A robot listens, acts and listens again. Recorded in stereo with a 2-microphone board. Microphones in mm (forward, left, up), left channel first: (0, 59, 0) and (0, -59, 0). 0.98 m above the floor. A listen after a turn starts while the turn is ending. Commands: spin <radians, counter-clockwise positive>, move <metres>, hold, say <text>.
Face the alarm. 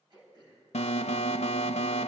spin 1.22
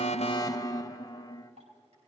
spin 0.52
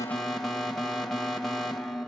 say Facing the alarm.